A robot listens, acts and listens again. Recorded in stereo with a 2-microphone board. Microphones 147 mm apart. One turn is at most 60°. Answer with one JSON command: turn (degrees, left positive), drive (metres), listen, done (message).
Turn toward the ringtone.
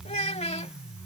{"listen": true}
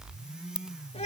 {"turn": -35}
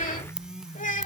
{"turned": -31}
{"done": "Facing the ringtone."}